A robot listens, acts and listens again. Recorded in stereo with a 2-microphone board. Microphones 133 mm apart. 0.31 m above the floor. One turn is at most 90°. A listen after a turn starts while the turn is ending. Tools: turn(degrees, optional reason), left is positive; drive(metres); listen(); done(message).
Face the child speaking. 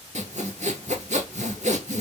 listen()
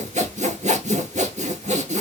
listen()
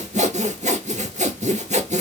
done("I can't make out a child speaking, only sawing.")